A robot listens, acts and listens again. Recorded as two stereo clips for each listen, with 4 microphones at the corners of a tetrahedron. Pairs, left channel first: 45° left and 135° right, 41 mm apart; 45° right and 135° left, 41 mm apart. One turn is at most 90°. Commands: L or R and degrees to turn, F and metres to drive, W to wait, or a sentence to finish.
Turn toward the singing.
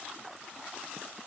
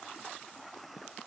W
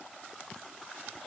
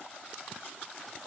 W
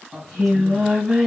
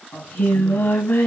R60
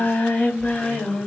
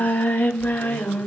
R10
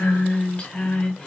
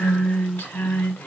R15
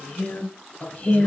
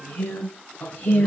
Facing the singing, 2 to 4 m away.